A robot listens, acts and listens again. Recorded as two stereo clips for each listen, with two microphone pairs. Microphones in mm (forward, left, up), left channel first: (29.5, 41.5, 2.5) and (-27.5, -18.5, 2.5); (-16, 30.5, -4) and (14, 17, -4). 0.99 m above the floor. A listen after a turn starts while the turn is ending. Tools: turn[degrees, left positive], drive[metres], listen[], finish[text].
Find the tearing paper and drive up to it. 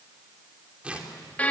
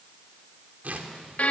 Thought: The tearing paper: 60° right.
Action: turn[-60]
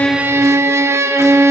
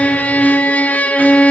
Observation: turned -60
Action: listen[]
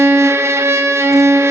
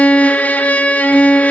Action: listen[]
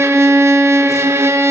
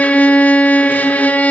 Action: finish[I heard tearing paper from this way, but can't make it out now. I did not reach it.]